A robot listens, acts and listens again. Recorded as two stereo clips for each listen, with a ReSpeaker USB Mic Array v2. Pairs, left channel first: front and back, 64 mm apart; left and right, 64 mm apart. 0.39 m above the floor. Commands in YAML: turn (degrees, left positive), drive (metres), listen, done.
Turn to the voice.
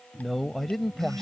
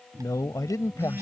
turn: 85
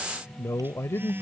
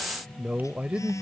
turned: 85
turn: -30
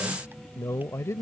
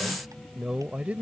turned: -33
turn: -30
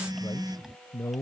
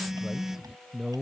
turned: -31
turn: -20
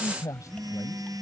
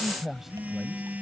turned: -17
done: "Found it: a man speaking, straight ahead."